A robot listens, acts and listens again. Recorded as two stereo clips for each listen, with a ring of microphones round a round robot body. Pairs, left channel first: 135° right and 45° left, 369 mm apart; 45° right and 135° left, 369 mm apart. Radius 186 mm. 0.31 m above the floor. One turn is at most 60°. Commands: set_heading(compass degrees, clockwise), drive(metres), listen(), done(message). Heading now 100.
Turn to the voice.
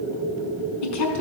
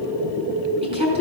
set_heading(160)
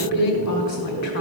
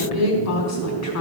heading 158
set_heading(218)
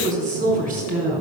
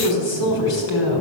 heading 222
set_heading(247)
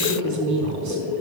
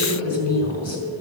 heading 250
done("Facing the woman speaking.")